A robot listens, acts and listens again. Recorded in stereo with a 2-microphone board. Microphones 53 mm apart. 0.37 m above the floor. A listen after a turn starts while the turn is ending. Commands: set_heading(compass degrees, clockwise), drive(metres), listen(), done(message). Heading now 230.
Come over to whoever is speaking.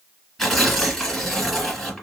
listen()
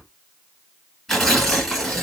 listen()
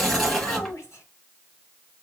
set_heading(165)
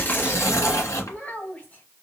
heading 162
set_heading(132)
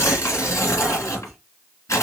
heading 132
listen()
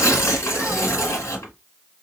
listen()
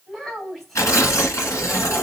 drive(1.0)
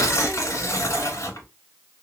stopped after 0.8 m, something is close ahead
listen()
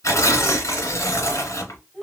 done("I am next to the child speaking.")